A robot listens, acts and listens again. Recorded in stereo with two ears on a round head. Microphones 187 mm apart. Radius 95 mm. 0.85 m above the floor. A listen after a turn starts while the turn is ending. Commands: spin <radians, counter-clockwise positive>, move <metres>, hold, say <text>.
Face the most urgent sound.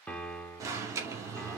spin -0.26
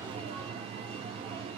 spin -2.62
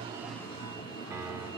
spin 0.44
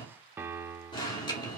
spin 0.44
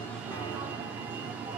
spin -0.17
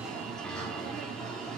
say Facing the alarm, 2 to 4 m away.